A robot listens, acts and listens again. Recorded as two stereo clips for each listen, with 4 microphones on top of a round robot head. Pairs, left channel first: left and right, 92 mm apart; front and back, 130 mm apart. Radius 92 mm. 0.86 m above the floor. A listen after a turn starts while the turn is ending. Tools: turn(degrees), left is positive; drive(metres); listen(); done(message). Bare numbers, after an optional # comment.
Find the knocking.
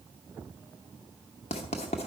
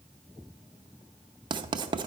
listen()
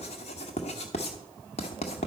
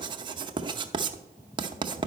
listen()
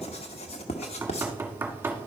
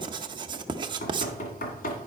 # The knocking: 20° right.
turn(-20)
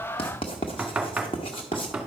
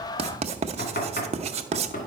done("Found it: knocking, straight ahead, 1 to 2 m away.")